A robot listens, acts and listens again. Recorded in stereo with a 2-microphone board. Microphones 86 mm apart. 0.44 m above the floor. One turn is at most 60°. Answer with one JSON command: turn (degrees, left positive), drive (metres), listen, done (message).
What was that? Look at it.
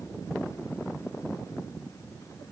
{"listen": true}
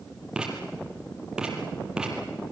{"turn": -30}
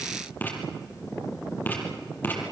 {"turn": 25}
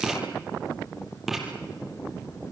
{"done": "Facing the writing."}